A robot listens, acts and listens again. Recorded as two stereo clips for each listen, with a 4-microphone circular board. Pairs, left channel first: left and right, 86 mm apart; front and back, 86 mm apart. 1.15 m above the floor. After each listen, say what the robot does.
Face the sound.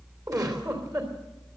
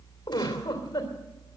Turn 45° right.
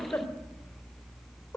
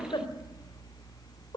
Turn 15° left.
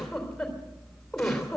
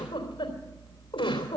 Found it: a giggle, straight ahead, 2 to 4 m away.